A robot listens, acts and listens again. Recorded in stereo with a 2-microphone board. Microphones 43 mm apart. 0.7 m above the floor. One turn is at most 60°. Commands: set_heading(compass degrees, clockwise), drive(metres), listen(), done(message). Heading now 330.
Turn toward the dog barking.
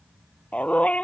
set_heading(300)
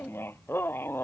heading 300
set_heading(240)
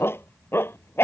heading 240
set_heading(180)
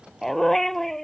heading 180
done("Facing the dog barking.")